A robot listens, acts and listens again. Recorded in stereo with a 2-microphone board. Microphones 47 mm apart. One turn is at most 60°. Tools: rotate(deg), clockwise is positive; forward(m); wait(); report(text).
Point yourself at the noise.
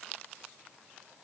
wait()
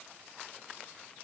wait()
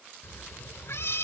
rotate(-60)
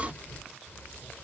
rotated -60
rotate(-40)
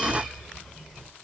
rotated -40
report("Found it: a cat meowing, straight ahead.")